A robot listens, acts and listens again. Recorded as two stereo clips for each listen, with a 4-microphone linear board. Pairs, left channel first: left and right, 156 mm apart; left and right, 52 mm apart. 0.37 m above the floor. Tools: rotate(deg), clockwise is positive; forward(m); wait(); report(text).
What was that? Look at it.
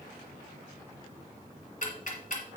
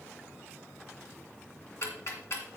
rotate(-55)
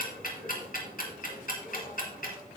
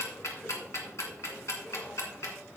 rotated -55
rotate(-65)
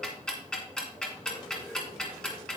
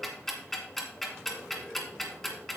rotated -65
report("Facing the ticking, 1 to 2 m away.")